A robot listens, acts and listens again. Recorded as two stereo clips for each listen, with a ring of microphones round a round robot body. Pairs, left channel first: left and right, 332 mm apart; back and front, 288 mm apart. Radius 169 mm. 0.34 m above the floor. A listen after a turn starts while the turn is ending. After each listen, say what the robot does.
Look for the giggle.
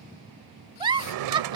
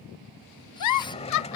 Turn 165° right.
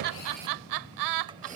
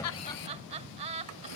Turn 70° right.
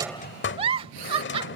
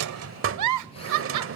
Turn 15° right.
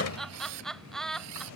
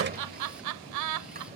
Facing the giggle.